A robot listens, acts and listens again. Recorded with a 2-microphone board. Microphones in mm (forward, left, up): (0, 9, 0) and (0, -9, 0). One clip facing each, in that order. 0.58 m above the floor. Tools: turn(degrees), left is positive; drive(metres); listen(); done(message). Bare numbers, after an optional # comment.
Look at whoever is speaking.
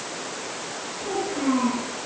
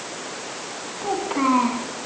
turn(-90)
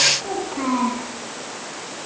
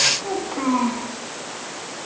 done("Found it: a child speaking, straight ahead.")